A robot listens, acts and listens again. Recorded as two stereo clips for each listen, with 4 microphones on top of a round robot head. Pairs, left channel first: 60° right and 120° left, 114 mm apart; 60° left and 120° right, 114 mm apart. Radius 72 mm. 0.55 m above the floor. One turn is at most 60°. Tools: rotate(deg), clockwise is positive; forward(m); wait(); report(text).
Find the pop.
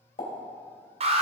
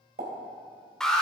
rotate(60)
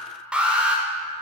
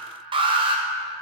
rotate(40)
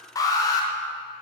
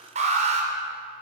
report("I heard a pop from this way, but can't make it out now.")